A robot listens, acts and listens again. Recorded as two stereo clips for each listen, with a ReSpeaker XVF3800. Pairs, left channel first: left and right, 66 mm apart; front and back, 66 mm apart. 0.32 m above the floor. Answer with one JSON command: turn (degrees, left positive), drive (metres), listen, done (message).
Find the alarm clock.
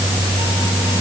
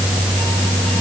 {"listen": true}
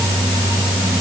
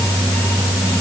{"listen": true}
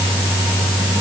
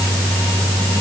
{"done": "I can't make out an alarm clock to turn to."}